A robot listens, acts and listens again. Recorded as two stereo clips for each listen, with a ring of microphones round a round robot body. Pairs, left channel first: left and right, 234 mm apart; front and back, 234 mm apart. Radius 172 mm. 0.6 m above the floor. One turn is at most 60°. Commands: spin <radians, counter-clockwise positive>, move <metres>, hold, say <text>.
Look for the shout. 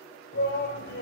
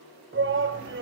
spin 1.05
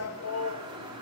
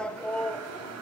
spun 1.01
spin 1.05
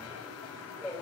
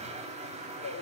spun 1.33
spin 0.17
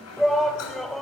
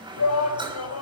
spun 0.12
say Found it: a shout, straight ahead.